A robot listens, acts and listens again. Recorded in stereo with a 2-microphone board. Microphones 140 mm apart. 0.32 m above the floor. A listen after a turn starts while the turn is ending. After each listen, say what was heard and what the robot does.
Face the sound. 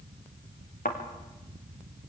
The thud: about 70° left or 110° left. Turn 70° left.
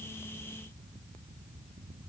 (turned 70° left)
Keep listening.
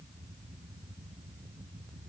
I heard a thud, but can't make it out now. It was about straight ahead or 40° left.